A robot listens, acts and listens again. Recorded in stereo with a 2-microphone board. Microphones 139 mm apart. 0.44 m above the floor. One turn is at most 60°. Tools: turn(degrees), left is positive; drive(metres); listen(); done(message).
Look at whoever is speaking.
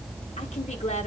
turn(degrees=55)
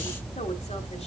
turn(degrees=60)
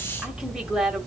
done("Facing the woman speaking.")